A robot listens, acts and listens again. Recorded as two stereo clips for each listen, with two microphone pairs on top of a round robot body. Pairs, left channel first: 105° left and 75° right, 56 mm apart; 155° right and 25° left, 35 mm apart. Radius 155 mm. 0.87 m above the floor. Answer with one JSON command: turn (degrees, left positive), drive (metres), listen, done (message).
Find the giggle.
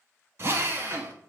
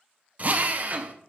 {"listen": true}
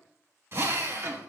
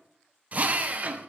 {"listen": true}
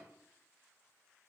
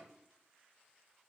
{"done": "I can't make out a giggle to turn to."}